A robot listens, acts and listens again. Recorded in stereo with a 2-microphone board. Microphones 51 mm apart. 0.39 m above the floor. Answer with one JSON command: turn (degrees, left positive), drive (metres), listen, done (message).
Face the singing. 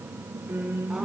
{"turn": -50}
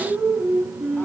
{"done": "Facing the singing."}